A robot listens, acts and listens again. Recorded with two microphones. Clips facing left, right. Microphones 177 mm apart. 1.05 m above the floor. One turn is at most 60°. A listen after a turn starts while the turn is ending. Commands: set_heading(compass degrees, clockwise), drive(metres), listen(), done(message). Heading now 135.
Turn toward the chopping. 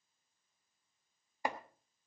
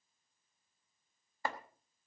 set_heading(105)
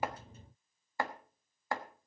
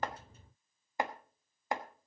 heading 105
set_heading(125)
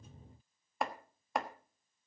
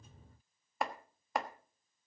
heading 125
done("Found it: chopping, straight ahead, 1 to 2 m away.")